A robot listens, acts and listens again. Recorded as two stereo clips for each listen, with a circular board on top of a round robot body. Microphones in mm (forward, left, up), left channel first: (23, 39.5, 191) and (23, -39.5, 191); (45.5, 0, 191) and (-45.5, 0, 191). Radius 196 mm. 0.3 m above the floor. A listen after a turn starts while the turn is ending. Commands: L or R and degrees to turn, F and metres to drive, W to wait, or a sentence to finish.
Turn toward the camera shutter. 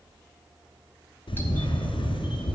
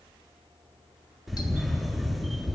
L90
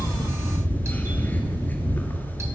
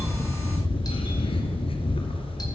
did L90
L20
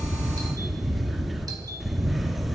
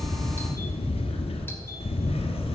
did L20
Facing the camera shutter.